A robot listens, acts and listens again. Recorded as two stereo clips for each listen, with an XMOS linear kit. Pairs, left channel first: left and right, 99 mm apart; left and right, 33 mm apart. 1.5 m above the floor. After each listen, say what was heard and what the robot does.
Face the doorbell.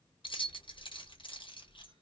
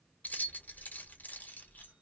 Keep listening.
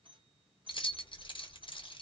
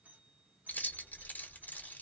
The doorbell: about 60° right or 120° right. Turn 60° right.
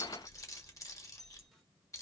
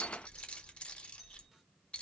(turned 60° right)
Keep listening.
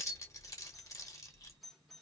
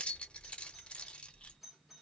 Facing the doorbell, 1 to 2 m away.